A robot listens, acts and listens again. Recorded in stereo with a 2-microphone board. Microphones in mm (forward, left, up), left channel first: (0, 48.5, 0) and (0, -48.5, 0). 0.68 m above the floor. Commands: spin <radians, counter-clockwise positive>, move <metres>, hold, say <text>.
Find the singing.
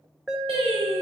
spin -1.57
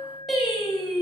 say Found it: singing, straight ahead, over 4 m away.